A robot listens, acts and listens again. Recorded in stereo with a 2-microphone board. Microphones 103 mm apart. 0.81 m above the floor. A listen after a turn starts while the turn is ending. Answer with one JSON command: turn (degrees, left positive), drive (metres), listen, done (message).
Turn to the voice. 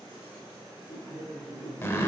{"turn": -20}
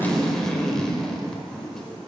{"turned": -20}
{"listen": true}
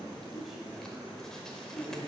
{"listen": true}
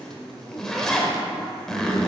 {"done": "Found it: a man speaking, straight ahead, 2 to 4 m away."}